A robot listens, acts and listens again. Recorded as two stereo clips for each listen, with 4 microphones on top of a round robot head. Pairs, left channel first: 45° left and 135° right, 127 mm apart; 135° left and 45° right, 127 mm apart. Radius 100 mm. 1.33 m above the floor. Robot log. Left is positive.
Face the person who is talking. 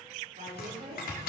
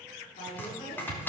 note: The woman speaking: 175° right.
cmd yaw -175
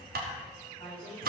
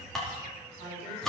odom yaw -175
end: Found it: a woman speaking, straight ahead, over 4 m away.